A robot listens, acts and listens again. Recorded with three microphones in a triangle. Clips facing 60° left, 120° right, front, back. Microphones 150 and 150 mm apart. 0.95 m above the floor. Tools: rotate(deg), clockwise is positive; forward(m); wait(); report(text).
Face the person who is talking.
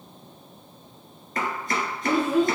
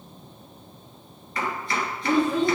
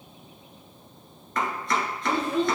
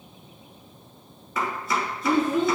rotate(-140)
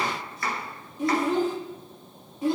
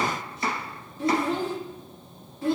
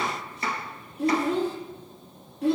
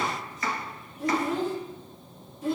rotate(10)
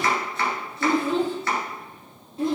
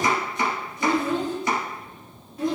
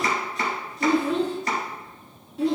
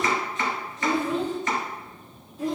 report("Found it: a child speaking, straight ahead.")